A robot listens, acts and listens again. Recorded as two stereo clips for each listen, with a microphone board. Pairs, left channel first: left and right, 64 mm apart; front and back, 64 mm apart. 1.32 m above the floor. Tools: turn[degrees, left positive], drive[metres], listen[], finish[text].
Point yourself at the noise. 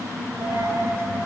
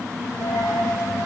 Thought: The dropped coin: 35° right.
Action: turn[-35]
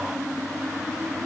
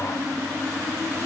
Action: finish[Facing where the dropped coin came from. I can't hear it now.]